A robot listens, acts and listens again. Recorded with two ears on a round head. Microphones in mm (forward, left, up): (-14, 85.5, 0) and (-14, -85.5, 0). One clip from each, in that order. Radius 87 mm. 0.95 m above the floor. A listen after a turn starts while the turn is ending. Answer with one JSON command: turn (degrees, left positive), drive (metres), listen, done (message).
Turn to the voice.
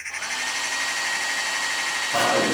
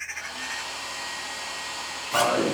{"turn": -50}
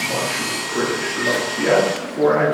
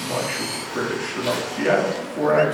{"turn": -80}
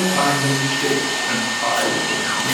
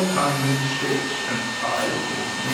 {"done": "Facing the man speaking, 1 to 2 m away."}